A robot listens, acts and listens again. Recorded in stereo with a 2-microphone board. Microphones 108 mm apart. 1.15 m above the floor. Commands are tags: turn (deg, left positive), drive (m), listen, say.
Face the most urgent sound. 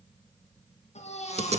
<turn deg="90"/>
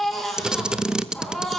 <say>Facing the baby crying.</say>